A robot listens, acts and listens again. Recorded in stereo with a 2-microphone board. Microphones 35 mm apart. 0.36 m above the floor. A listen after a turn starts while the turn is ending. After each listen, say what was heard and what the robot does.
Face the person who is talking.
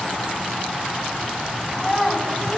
Turn 30° left.
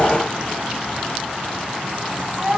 So it is at 25° right. Turn 25° right.
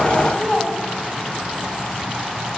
Facing the child speaking.